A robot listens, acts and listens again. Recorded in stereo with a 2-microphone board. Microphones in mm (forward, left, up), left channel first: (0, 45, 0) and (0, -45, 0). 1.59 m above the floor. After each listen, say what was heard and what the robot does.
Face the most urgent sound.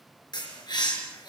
Keep listening.
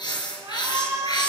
The shout: about 40° right or 140° right. Turn 40° right.
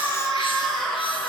Found it: a shout, straight ahead.